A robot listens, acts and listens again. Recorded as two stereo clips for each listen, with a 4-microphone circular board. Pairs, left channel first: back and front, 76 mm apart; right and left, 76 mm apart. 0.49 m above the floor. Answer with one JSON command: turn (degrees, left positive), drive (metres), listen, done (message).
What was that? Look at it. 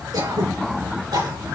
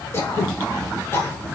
{"turn": -30}
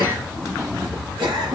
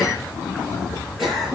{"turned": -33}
{"done": "Facing the throat clearing, over 4 m away."}